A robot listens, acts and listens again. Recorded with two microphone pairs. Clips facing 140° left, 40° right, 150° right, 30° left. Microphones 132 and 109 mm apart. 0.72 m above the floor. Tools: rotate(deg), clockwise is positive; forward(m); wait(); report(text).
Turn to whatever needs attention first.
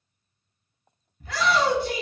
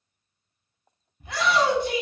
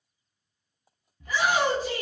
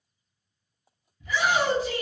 rotate(105)
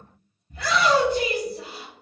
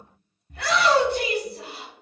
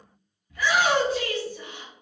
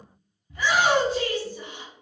rotate(35)
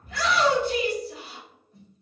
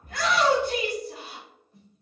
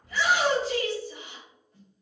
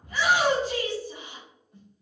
report("Found it: a shout, straight ahead, 1 to 2 m away.")